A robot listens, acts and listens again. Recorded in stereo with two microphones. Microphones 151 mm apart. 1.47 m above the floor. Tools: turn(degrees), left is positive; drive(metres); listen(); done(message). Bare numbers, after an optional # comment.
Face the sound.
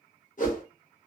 # The whoosh: about 55° left or 125° left.
turn(55)
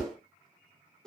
done("Found it: a whoosh, straight ahead.")